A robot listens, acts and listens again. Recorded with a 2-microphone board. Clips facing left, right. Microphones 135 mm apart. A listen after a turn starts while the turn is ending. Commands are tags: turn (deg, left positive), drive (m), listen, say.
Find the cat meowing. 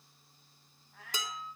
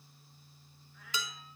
<turn deg="90"/>
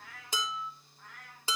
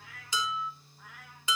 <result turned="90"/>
<turn deg="-10"/>
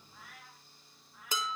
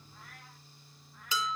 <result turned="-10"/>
<say>Found it: a cat meowing, straight ahead.</say>